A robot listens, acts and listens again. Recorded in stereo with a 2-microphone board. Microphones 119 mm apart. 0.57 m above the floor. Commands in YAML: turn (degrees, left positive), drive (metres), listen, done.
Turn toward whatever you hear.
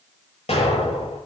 turn: 65
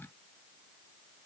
listen: true
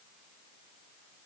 done: "I heard an explosion, but can't make it out now. It was about straight ahead or 50° left."